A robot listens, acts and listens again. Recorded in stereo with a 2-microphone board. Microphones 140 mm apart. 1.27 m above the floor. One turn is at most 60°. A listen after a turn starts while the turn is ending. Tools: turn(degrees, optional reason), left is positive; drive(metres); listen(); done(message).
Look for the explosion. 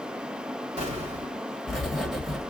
turn(degrees=-50, reason="The explosion: about 50° right or 130° right.")
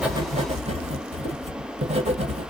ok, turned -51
listen()
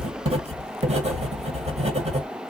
done("I heard an explosion, but can't make it out now. It was about straight ahead or 80° right.")